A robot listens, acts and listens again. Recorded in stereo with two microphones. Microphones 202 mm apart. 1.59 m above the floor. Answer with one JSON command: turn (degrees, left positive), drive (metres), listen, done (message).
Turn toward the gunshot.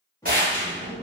{"turn": -45}
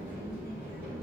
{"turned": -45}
{"listen": true}
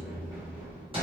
{"done": "I heard a gunshot, but can't make it out now. It was about straight ahead or 90° right."}